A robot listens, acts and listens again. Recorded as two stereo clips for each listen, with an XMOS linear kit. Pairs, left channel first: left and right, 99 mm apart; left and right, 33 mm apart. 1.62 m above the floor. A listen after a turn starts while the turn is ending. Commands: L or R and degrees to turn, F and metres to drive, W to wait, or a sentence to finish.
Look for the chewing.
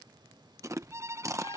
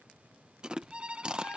R30
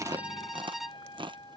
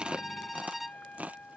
R115
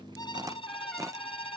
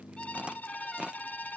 W
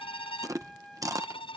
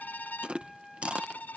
R40
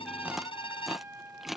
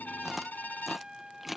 Found it: chewing, straight ahead.